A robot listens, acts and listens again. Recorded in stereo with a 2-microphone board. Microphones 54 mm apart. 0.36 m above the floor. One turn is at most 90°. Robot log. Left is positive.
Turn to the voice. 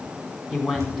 cmd yaw -30
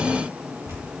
cmd idle
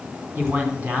note: So it is at 145° right.
cmd yaw -90
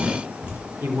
note: The man speaking is now 100° right.
cmd yaw -90
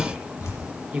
note: The man speaking is now 15° right.
cmd yaw -15
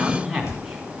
end: Found it: a man speaking, straight ahead.